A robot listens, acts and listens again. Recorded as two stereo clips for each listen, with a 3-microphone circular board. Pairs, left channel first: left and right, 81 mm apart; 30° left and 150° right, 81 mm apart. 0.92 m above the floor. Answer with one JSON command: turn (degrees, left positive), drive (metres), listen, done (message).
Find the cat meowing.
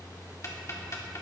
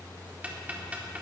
{"listen": true}
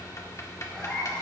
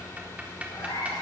{"turn": 15}
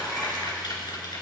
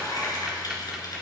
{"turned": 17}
{"listen": true}
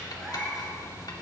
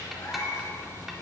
{"done": "Facing the cat meowing."}